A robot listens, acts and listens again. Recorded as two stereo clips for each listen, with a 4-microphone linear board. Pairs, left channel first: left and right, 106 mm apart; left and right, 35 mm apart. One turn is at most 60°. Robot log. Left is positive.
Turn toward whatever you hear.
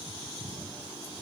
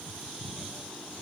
cmd idle
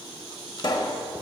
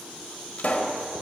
note: The pop: about 45° left or 135° left.
cmd yaw +45
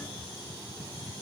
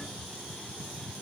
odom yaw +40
cmd idle
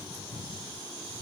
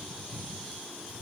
end: I heard a pop, but can't make it out now. It was about 5° left or 95° left.